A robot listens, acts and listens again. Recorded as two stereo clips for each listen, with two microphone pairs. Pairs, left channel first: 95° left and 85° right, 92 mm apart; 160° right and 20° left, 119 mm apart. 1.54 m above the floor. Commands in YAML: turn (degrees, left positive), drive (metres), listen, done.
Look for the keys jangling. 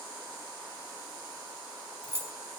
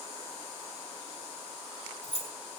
turn: -145
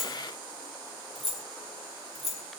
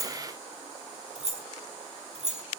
done: "Facing the keys jangling, 1 to 2 m away."